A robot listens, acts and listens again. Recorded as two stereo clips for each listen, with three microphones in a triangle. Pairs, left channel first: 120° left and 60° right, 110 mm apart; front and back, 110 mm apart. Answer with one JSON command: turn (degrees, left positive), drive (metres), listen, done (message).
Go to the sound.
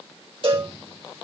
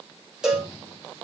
{"turn": -95}
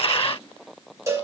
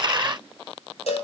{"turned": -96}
{"drive": 1.0}
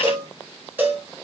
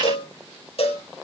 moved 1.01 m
{"turn": 10}
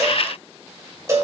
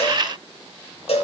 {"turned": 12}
{"drive": 1.0}
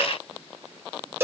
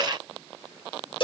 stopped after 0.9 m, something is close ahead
{"done": "I am next to the cowbell."}